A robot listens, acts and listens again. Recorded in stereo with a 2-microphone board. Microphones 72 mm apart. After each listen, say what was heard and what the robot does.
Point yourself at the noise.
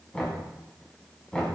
The knocking: about 15° left or 165° left. Turn 15° left.
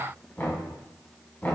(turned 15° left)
So it is at 150° left. Turn 150° left.
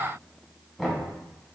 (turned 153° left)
Found it: knocking, straight ahead, 2 to 4 m away.